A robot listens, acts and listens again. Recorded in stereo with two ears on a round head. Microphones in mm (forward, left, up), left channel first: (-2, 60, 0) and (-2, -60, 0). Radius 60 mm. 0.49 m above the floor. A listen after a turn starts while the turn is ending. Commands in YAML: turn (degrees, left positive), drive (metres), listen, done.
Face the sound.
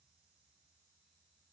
listen: true
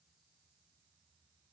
listen: true
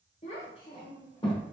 turn: 35
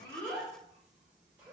turn: -15
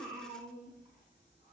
turn: -20
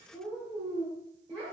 turn: -10
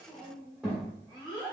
done: "Facing the child speaking."